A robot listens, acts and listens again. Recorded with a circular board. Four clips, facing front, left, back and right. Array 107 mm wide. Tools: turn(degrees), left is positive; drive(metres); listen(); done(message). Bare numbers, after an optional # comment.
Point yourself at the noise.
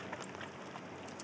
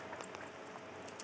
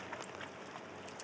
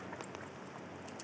listen()
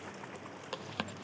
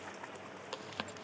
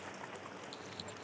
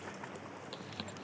# The chewing: 25° left.
turn(25)
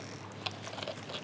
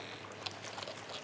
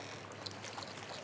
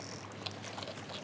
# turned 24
done("Found it: chewing, straight ahead.")